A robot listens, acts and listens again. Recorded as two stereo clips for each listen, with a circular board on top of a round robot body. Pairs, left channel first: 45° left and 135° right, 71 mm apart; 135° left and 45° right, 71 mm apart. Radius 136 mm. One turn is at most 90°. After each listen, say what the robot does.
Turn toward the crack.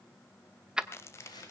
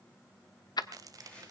Turn 10° right.
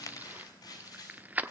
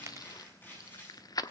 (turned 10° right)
I heard a crack from this way, but can't make it out now.